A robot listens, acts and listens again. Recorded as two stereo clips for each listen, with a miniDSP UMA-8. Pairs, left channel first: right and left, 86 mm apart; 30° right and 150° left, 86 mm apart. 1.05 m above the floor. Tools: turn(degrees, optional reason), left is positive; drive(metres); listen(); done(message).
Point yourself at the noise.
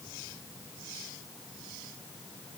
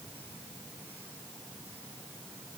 listen()
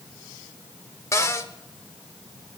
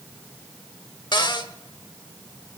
turn(degrees=-40, reason="The cupboard door: 40° right.")
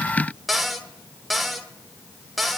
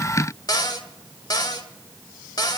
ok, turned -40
done("Found it: a cupboard door, straight ahead.")